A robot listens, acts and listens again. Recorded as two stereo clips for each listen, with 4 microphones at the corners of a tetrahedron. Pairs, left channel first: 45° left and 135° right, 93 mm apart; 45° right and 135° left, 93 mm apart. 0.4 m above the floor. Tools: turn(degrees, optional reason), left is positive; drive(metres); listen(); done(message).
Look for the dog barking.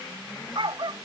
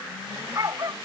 turn(degrees=-170, reason="The dog barking: 170° right.")
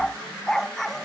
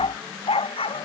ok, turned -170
turn(degrees=-40, reason="The dog barking is now 40° right.")
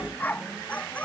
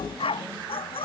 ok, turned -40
turn(degrees=-30, reason="The dog barking is now 30° right.")
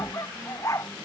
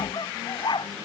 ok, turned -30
turn(degrees=-10, reason="The dog barking is now 10° right.")
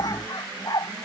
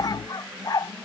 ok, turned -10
done("Found it: a dog barking, straight ahead.")